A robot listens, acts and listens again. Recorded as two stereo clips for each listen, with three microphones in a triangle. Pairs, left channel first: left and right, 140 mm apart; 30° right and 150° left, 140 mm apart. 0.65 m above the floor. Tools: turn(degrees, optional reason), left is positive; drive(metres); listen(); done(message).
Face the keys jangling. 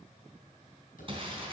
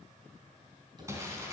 listen()
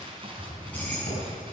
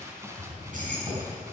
turn(degrees=170, reason="The keys jangling: 170° left.")
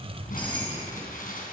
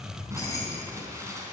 turn(degrees=35, reason="The keys jangling is now 35° left.")
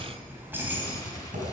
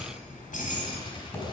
turn(degrees=-15, reason="The keys jangling is now 15° right.")
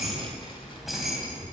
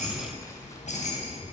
done("Facing the keys jangling.")